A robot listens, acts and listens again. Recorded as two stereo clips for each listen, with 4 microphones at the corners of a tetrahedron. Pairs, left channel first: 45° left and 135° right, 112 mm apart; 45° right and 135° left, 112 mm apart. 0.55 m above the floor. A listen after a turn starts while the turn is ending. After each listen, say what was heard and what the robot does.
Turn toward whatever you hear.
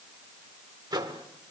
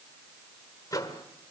The microwave: 95° right. Turn 95° right.
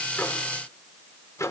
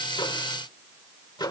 The microwave is now 10° right. Turn 10° right.
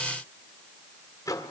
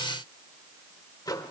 Facing the microwave.